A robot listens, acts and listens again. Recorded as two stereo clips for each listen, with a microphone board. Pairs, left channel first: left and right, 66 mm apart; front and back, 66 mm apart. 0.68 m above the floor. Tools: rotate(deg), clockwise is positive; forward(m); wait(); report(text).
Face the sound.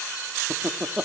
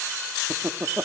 rotate(155)
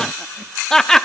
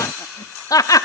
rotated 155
rotate(-10)
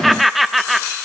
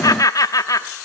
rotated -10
report("Found it: laughter, straight ahead, under 1 m away.")